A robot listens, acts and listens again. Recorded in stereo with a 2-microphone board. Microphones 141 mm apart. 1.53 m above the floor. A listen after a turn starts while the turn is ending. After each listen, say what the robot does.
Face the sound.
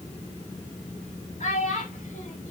Turn 55° left.
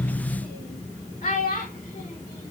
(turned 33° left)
Turn 75° left.
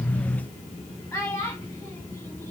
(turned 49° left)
Turn 20° left.
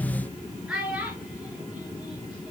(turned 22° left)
Found it: a child speaking, straight ahead.